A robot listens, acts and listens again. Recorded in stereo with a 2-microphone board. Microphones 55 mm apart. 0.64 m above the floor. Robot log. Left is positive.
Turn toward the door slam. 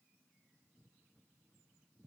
cmd idle
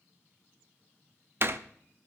note: The door slam: about 45° right or 135° right.
cmd yaw -45
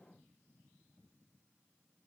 cmd idle
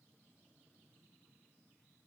end: I heard a door slam, but can't make it out now. It was about straight ahead or 90° right.